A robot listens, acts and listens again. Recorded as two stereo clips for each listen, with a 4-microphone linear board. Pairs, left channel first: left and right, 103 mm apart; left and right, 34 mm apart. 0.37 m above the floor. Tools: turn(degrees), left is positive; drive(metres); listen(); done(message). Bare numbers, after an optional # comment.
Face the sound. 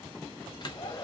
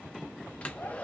# The hair dryer: about 45° left or 135° left.
turn(45)
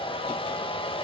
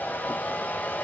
# So it is at 80° left.
turn(80)
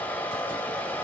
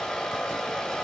# The hair dryer is now 15° left.
turn(15)
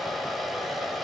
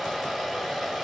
done("Facing the hair dryer, under 1 m away.")